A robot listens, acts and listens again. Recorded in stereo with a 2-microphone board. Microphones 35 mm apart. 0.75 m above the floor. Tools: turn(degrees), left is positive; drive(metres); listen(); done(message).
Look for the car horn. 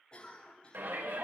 listen()
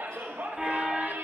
turn(degrees=-30)
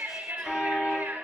turn(degrees=15)
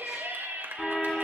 done("Found it: a car horn, straight ahead, 2 to 4 m away.")